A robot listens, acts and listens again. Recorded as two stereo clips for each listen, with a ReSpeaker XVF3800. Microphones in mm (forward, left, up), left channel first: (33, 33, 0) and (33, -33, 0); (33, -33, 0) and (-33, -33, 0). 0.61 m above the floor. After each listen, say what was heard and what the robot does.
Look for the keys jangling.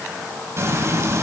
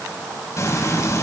Keep listening.
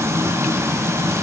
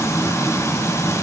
Keep listening.
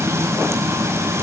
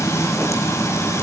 I can't make out keys jangling, only frying.